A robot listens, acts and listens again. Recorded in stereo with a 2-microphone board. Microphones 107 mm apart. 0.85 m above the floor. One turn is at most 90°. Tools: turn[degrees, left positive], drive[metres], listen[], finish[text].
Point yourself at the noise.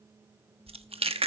Thought: The chewing: about 65° right or 115° right.
Action: turn[-65]
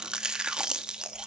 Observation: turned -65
Thought: So it is at 10° right.
Action: turn[-10]
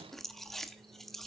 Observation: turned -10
Action: finish[Found it: chewing, straight ahead, 1 to 2 m away.]